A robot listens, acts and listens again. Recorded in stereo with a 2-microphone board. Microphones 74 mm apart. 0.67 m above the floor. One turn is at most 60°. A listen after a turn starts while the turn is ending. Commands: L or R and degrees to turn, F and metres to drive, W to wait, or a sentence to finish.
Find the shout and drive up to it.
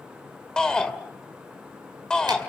L30
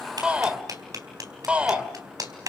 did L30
R15
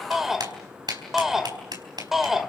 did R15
F1.0
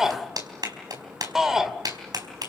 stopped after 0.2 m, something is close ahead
Something is in my way. I am facing the shout but have not reached it.